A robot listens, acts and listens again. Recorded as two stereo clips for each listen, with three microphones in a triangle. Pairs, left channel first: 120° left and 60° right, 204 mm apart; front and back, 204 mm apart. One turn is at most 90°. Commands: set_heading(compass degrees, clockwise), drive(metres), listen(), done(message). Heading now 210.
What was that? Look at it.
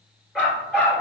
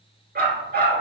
set_heading(300)
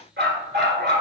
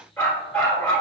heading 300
set_heading(25)
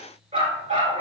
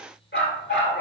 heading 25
set_heading(40)
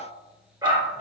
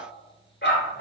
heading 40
done("Found it: a dog barking, straight ahead.")